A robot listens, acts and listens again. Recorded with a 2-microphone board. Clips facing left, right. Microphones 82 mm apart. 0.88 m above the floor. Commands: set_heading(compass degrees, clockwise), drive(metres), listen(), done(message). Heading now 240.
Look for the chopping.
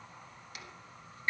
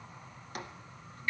set_heading(285)
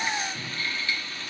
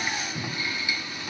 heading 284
listen()
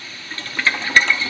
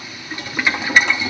listen()
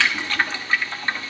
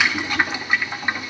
done("I heard chopping, but can't make it out now. It was about 5° right or 90° right.")